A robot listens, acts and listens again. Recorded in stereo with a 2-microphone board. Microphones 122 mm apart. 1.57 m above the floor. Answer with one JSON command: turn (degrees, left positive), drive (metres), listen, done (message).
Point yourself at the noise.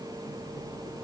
{"listen": true}
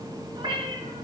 {"turn": -45}
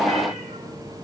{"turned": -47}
{"listen": true}
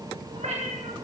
{"turn": -70}
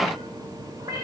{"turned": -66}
{"turn": -30}
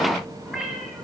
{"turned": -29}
{"done": "Found it: a cat meowing, straight ahead."}